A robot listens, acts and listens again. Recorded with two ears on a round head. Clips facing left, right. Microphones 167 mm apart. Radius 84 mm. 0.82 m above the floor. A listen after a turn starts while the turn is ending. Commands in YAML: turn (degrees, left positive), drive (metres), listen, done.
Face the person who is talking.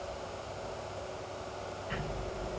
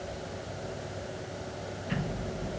listen: true
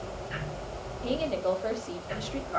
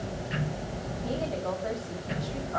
turn: 40
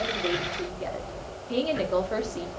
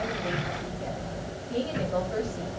turn: 100
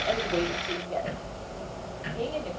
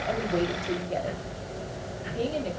turn: -20
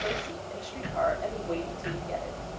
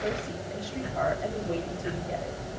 turn: -10
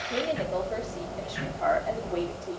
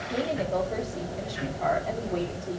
done: "Found it: a woman speaking, straight ahead, 1 to 2 m away."